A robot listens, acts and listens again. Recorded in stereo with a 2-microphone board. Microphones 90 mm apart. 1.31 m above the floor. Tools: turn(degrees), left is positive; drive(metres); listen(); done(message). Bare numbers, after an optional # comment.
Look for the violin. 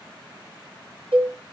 listen()
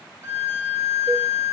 # The violin: about 25° right or 155° right.
turn(-25)
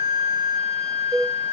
# So it is at 125° right.
turn(-125)
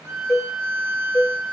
# The violin is now 35° right.
turn(-35)
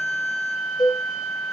done("Facing the violin.")